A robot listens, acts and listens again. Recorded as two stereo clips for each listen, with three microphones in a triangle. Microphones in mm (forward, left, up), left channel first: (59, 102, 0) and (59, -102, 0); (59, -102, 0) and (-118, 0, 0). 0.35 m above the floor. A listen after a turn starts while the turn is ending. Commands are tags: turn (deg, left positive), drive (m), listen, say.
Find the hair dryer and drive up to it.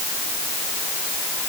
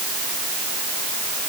<listen/>
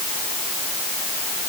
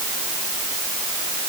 <listen/>
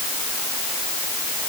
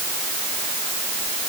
<say>I can't make out a hair dryer to turn to.</say>